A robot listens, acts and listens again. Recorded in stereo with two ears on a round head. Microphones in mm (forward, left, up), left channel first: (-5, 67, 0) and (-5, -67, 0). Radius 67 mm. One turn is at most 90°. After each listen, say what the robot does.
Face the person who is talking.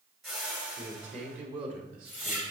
Turn 55° right.
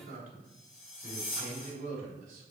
Turn 55° right.
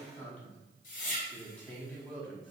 Turn 10° left.
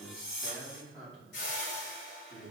Found it: a man speaking, straight ahead, over 4 m away.